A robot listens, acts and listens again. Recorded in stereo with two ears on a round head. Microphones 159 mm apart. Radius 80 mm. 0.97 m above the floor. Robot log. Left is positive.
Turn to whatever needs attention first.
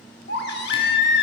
note: The baby crying: about 60° left or 120° left.
cmd yaw +60
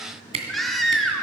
end: Found it: a baby crying, straight ahead, 1 to 2 m away.